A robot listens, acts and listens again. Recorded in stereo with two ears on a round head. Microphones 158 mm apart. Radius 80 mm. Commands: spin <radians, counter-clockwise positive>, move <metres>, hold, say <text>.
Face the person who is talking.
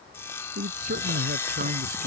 spin -0.87
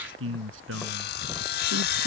spin -1.40
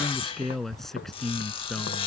say Found it: a man speaking, straight ahead.